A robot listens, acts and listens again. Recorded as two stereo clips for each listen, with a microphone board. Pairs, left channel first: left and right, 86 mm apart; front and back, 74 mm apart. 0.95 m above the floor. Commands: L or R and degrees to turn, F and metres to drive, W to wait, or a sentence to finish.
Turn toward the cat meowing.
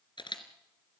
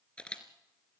W
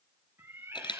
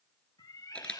R35
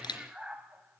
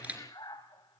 R15
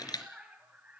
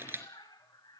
R15
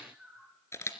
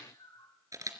Found it: a cat meowing, straight ahead.